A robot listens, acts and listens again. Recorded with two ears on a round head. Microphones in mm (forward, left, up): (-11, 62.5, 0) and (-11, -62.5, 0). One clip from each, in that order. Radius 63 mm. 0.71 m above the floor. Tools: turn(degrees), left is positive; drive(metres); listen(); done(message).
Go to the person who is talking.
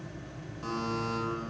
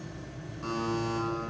listen()
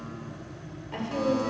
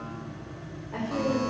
turn(degrees=65)
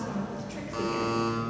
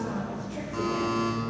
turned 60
turn(degrees=45)
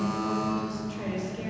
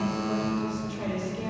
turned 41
drive(metres=1.0)
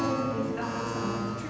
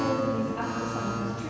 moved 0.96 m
turn(degrees=10)
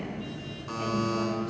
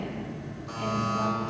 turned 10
listen()
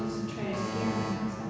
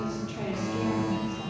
drive(metres=1.0)
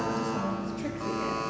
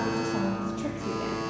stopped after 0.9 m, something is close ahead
done("I am next to the woman speaking.")